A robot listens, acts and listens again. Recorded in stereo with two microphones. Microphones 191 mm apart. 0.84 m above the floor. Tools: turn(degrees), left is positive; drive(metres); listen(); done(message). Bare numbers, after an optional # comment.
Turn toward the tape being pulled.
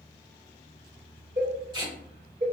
# The tape being pulled: about 20° right or 160° right.
turn(-20)
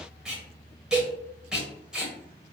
done("Found it: tape being pulled, straight ahead, 1 to 2 m away.")